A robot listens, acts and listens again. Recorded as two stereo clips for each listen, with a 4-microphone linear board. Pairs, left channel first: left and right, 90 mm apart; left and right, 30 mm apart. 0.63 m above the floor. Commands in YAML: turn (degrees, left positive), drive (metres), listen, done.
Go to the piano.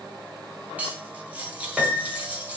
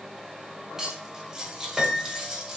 turn: -30
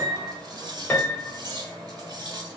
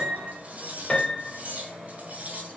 turn: 25
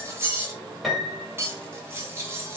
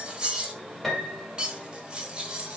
drive: 1.0
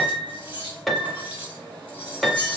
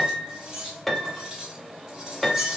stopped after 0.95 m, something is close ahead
done: "Arrived at the piano, straight ahead."